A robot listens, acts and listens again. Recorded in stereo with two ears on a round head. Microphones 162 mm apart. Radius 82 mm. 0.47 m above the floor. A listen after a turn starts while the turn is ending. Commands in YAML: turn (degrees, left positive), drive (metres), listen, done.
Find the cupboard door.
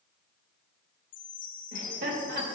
listen: true
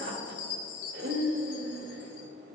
listen: true
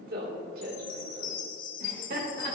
done: "I can't make out a cupboard door, only a chime and laughter."